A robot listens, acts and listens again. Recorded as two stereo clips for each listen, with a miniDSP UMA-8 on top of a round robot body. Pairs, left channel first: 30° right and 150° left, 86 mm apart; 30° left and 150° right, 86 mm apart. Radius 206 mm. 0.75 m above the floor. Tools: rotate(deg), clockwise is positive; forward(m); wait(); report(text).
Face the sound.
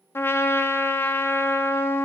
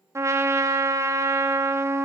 rotate(90)
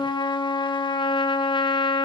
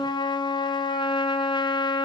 report("Found it: a trumpet, straight ahead.")